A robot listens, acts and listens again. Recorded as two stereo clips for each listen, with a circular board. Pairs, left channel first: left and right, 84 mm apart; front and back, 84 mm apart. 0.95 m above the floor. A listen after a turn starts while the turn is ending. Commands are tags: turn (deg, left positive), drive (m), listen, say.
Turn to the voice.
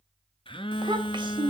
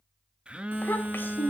<turn deg="-65"/>
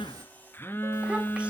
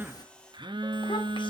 <listen/>
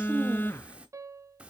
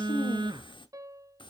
<turn deg="-15"/>
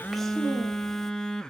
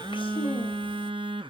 <listen/>
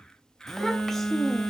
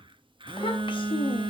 <listen/>
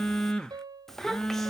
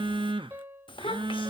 <say>Facing the child speaking.</say>